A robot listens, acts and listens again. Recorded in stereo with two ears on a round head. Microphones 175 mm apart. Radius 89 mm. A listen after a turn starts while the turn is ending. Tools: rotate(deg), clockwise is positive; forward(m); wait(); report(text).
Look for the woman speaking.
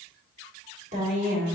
rotate(45)
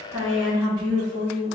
rotate(30)
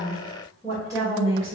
rotate(20)
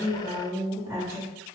rotate(15)
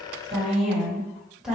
report("Found it: a woman speaking, straight ahead.")